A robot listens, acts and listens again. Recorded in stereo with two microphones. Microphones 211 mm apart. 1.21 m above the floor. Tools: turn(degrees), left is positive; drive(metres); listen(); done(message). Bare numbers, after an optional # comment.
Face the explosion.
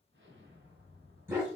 # The explosion: about 65° right or 115° right.
turn(-65)
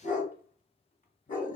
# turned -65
listen()
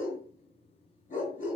done("I heard an explosion, but can't make it out now. It was about straight ahead or 50° right.")